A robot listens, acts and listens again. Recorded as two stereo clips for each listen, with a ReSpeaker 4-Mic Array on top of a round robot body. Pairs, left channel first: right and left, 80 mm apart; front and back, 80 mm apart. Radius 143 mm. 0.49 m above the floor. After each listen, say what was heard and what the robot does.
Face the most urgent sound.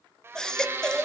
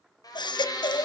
The baby crying: 10° right. Turn 10° right.
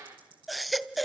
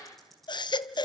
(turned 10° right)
Facing the baby crying, under 1 m away.